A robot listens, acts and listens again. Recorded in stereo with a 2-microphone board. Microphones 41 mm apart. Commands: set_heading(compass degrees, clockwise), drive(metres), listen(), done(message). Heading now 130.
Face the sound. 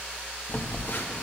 set_heading(70)
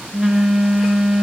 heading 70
done("Facing the phone buzzing, 1 to 2 m away.")